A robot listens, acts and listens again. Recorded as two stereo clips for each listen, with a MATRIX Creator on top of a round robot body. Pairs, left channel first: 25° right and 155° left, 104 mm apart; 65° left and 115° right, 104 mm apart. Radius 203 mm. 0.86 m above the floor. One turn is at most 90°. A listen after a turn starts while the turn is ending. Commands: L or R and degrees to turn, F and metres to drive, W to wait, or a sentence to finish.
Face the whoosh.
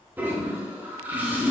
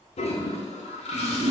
R90
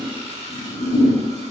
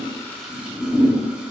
Facing the whoosh, 1 to 2 m away.